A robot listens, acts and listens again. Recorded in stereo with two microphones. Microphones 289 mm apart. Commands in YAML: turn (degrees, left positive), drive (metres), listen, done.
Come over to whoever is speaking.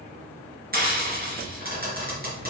listen: true
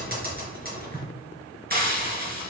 listen: true
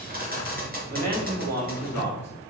turn: -60
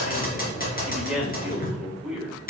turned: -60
drive: 1.0
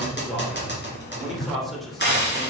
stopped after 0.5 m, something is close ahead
done: "Something is in my way. I am facing the man speaking but have not reached it."